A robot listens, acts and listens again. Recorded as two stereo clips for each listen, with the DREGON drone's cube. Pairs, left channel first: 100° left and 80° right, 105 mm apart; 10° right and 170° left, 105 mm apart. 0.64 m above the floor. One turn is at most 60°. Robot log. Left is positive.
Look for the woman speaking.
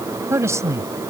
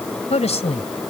note: The woman speaking: 20° right.
cmd yaw -20
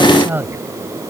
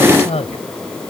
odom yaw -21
note: The woman speaking is now 10° right.
cmd yaw -10
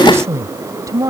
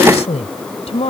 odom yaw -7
note: The woman speaking is now 25° right.
cmd yaw -25
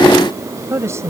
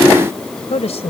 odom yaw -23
note: The woman speaking is now 20° right.
cmd yaw -20
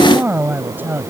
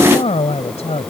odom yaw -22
note: The woman speaking is now 10° right.
cmd yaw -10
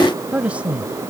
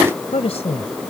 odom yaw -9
end: Facing the woman speaking.